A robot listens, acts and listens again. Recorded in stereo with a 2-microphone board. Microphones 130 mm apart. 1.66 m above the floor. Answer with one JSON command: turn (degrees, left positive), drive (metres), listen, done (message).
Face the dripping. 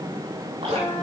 {"turn": -50}
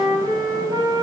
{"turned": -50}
{"listen": true}
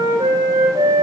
{"listen": true}
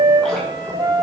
{"done": "I heard dripping, but can't make it out now. It was about straight ahead or 80° right."}